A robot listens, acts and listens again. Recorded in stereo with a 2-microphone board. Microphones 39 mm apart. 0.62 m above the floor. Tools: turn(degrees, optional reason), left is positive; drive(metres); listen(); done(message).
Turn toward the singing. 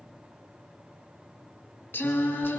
turn(degrees=90)
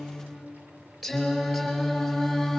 done("Facing the singing, over 4 m away.")